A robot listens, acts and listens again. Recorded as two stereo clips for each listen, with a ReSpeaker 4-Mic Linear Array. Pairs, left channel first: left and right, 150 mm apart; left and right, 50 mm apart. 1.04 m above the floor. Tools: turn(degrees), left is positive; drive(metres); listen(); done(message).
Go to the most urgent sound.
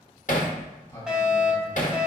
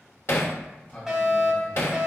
turn(degrees=-30)
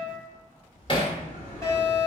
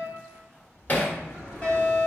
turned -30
turn(degrees=25)
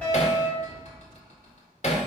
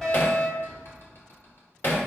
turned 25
turn(degrees=10)
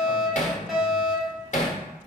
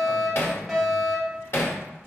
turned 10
drive(metres=1.0)
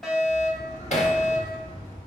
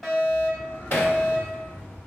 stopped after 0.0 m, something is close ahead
done("Blocked. The fire alarm is further on, straight ahead.")